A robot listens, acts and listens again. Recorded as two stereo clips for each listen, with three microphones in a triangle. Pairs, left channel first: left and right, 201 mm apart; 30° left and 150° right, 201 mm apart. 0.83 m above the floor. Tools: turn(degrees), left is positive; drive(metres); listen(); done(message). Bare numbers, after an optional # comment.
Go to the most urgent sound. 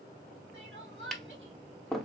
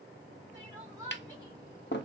# The crying: 75° right.
turn(-75)
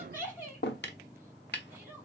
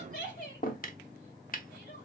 # The crying is now 10° right.
turn(-10)
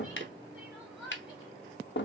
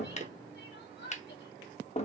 drive(1.0)
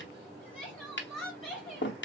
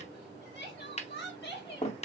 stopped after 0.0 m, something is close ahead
done("Something is in my way. I am facing the crying but have not reached it.")